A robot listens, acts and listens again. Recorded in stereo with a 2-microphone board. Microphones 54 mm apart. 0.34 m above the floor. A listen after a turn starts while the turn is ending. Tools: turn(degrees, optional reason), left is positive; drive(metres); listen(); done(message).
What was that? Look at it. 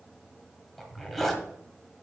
turn(degrees=30)
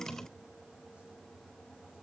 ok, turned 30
listen()
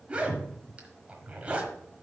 turn(degrees=-25, reason="So it is at 25° right.")
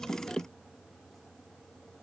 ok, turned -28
listen()
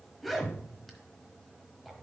done("Found it: a zipper, straight ahead, 1 to 2 m away.")